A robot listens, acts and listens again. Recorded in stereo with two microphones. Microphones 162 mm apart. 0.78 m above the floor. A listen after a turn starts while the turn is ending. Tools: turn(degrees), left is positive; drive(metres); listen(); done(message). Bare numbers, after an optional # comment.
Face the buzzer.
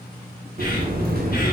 # The buzzer: about 70° right or 110° right.
turn(-70)
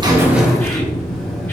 done("Found it: a buzzer, straight ahead.")